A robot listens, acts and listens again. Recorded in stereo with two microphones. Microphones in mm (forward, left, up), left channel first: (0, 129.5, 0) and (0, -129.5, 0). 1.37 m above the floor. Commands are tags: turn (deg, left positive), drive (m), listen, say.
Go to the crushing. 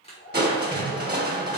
<turn deg="-40"/>
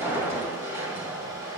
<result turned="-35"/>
<turn deg="-10"/>
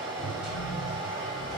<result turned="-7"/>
<drive m="1.0"/>
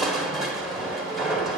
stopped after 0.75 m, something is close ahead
<say>Arrived at the crushing, straight ahead.</say>